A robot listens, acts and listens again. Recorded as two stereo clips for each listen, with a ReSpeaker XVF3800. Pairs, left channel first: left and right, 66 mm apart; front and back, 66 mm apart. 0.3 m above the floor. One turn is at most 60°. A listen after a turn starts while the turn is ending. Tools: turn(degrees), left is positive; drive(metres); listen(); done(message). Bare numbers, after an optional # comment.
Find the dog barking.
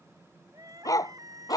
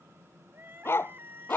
# The dog barking: 55° left.
turn(55)
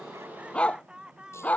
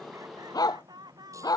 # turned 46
# The dog barking is now 20° left.
turn(20)
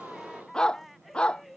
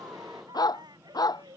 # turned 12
# The dog barking is now 15° left.
turn(15)
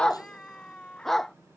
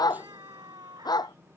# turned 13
done("Facing the dog barking.")